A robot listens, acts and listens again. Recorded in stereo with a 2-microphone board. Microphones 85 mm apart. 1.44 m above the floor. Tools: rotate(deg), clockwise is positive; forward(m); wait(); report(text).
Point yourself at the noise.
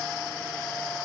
wait()
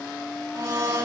rotate(40)
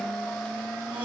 wait()
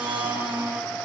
rotate(100)
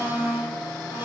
rotate(25)
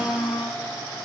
rotate(10)
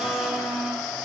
report("Facing the blender, over 4 m away.")